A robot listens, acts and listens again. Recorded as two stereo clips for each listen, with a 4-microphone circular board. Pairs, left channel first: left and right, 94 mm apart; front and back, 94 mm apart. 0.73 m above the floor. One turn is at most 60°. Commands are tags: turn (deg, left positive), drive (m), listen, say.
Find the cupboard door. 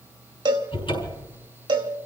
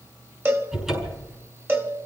<turn deg="60"/>
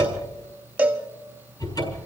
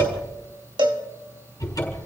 <turn deg="50"/>
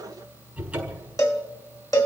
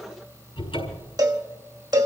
<turn deg="-10"/>
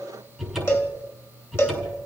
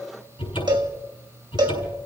<say>Facing the cupboard door.</say>